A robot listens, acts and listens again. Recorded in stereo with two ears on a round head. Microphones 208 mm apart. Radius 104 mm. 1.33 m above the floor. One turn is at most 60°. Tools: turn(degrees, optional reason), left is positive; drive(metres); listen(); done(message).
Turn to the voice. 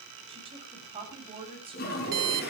turn(degrees=-25, reason="The woman speaking: about 25° right or 155° right.")
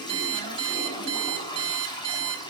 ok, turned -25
listen()
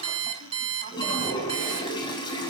listen()
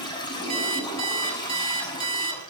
done("I heard a woman speaking, but can't make it out now. It was about straight ahead or 130° right.")